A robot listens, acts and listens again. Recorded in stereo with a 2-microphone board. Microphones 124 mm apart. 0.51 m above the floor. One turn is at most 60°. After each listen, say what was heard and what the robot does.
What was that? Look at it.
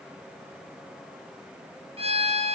The violin: about 50° right or 130° right. Turn 50° right.
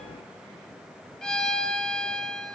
Found it: a violin, straight ahead, 2 to 4 m away.